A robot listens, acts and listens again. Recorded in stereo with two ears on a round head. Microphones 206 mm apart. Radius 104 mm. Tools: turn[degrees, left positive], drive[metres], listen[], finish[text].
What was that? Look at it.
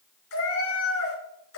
Thought: The cat meowing: about 70° left or 110° left.
Action: turn[70]
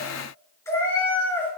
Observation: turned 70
Thought: So it is at 10° left.
Action: turn[10]
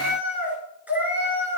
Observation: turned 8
Thought: The cat meowing is now 10° right.
Action: turn[-10]
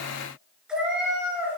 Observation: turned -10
Action: finish[Facing the cat meowing.]